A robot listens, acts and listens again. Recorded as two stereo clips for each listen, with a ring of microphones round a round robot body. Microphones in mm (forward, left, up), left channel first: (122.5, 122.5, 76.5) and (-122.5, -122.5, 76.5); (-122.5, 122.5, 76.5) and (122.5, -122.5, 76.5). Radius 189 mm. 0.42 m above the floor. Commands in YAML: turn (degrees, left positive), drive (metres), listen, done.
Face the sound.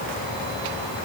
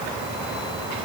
listen: true
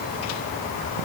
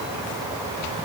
listen: true
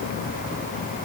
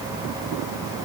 done: "I can't make out anything."